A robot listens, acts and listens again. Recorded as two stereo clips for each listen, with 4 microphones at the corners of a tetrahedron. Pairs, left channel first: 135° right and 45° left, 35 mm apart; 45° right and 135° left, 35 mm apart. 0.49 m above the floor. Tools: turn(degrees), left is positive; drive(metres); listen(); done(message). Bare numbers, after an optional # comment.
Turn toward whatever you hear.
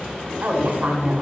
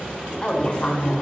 # The woman speaking: 15° left.
turn(15)
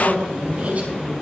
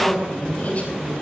done("Found it: a woman speaking, straight ahead, over 4 m away.")